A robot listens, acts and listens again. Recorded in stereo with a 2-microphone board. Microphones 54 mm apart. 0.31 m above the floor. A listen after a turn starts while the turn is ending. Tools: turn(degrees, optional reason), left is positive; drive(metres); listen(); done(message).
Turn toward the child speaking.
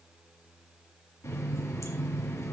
listen()
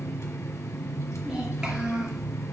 turn(degrees=-15, reason="The child speaking: about 15° right or 165° right.")
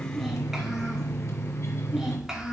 turn(degrees=-30)
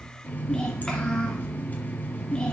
turn(degrees=15, reason="So it is at 15° left.")
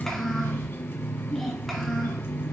done("Found it: a child speaking, straight ahead, 2 to 4 m away.")